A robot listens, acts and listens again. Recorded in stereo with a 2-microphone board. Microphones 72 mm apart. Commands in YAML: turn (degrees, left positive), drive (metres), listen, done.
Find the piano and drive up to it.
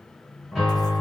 turn: 30
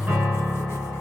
turn: -30
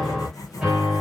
turn: -10
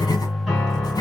drive: 1.0
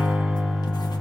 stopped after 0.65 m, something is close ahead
done: "Arrived at the piano, straight ahead."